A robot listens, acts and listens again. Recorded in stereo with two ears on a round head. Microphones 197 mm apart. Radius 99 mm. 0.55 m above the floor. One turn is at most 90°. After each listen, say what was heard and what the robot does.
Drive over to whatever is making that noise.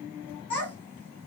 The child speaking: about 25° left or 155° left. Turn 25° left.
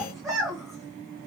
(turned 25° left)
Drive 1.0 m forward.
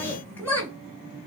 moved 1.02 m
The child speaking is now 10° left. Turn 10° left.
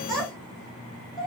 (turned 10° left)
Drive 1.0 m forward.
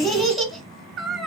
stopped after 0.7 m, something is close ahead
Arrived at the child speaking, straight ahead.